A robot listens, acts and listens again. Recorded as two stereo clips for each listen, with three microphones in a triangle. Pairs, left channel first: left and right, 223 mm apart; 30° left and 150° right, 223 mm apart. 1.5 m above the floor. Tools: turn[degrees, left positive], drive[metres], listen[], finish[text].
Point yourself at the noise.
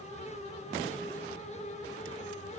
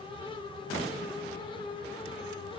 Action: listen[]
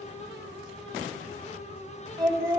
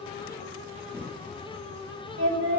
Thought: The singing: 160° right.
Action: turn[-160]
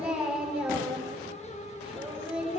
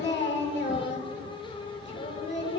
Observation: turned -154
Action: finish[Found it: singing, straight ahead, over 4 m away.]